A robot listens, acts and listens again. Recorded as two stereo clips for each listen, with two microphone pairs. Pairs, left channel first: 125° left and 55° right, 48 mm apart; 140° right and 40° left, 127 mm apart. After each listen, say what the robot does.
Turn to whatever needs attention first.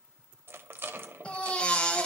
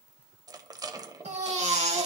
Turn 55° left.
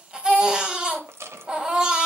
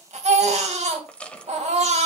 Turn 15° left.
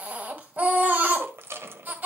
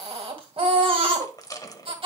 Facing the baby crying.